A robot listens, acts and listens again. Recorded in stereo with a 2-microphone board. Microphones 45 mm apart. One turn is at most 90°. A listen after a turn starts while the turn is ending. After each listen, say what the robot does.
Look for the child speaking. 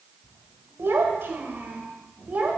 Turn 35° right.
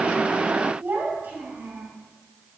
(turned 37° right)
Turn 40° right.
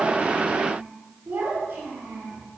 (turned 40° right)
Turn 90° right.
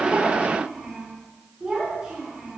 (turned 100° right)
Turn 15° right.
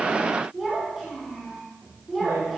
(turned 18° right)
Found it: a child speaking, straight ahead, 2 to 4 m away.